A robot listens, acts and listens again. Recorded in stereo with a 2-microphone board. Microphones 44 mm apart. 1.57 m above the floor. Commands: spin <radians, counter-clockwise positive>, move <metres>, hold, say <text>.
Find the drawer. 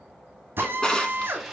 spin 0.35
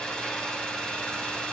hold
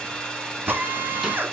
hold
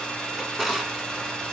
say Facing the drawer.